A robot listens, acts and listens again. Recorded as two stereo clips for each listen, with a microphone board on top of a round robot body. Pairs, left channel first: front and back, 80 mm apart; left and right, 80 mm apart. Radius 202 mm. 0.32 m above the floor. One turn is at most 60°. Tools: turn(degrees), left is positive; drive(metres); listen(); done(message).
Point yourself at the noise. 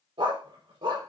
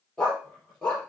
turn(degrees=60)
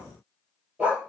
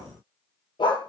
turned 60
turn(degrees=60)
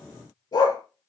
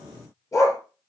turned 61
turn(degrees=40)
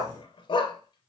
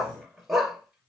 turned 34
done("Facing the dog barking.")